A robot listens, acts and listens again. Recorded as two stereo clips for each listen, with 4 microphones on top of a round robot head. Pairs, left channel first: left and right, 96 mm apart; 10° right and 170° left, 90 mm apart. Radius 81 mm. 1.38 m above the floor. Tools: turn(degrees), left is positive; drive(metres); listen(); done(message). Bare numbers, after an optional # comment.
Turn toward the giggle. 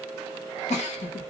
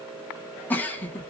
# The giggle: 65° left.
turn(65)
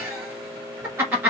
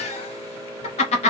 # The giggle is now 15° right.
turn(-15)
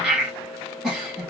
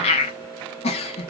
done("Facing the giggle, 1 to 2 m away.")